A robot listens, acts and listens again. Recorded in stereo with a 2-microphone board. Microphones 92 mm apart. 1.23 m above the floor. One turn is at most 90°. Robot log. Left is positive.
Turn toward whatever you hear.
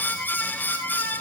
cmd idle
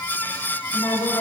note: The woman speaking: about 55° left or 125° left.
cmd yaw +55
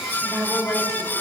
end: Found it: a woman speaking, straight ahead, over 4 m away.